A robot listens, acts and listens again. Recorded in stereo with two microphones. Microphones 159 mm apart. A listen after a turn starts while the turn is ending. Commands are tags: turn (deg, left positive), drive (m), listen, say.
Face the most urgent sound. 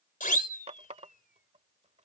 <turn deg="60"/>
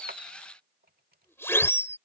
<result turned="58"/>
<turn deg="15"/>
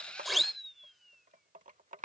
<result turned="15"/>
<say>Facing the siren.</say>